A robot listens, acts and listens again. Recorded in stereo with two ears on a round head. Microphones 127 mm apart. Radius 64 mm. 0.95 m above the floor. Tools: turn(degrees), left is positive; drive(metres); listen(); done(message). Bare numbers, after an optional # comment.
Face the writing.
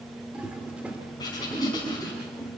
# The writing: about 30° left or 150° left.
turn(30)
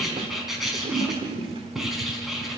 done("Facing the writing, 2 to 4 m away.")